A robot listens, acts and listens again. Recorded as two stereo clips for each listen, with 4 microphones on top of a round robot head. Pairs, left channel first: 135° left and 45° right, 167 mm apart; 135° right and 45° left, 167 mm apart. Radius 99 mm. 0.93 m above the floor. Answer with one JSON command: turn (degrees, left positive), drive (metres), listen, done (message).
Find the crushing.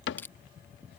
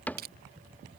{"turn": 60}
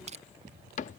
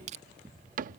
{"done": "Facing the crushing."}